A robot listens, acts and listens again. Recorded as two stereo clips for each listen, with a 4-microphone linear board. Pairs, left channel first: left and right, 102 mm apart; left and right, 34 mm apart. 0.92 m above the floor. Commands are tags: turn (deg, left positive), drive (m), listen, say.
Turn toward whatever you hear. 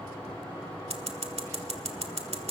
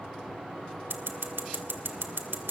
<turn deg="-90"/>
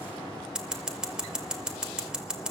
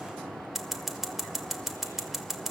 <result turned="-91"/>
<say>Facing the scissors.</say>